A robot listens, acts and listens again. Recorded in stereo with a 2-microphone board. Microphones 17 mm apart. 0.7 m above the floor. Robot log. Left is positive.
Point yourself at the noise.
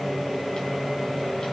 cmd idle
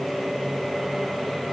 cmd idle
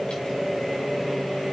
end: I can't make out anything.